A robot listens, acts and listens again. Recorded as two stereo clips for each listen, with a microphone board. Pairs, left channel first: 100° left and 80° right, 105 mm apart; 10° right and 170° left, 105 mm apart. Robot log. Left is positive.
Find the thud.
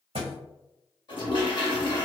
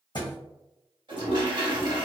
note: The thud: 55° right.
cmd yaw -55
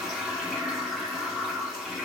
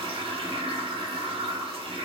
end: I heard a thud from this way, but can't make it out now.